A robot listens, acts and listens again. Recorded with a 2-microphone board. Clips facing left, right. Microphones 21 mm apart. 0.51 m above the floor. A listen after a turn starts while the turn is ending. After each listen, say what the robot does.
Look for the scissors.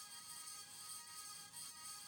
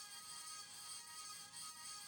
Keep listening.
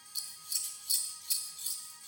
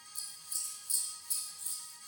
Turn 55° left.
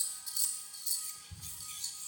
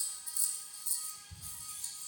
Turn 65° left.
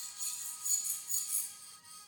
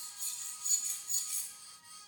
Turn 15° right.
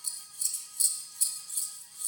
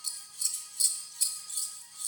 Facing the scissors, under 1 m away.